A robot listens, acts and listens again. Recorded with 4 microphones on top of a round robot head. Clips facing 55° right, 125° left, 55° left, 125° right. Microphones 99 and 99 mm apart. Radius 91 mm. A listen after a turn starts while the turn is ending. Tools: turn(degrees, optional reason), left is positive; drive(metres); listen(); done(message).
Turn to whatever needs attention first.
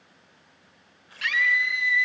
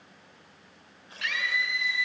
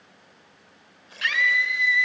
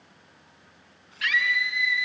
done("Found it: a scream, straight ahead.")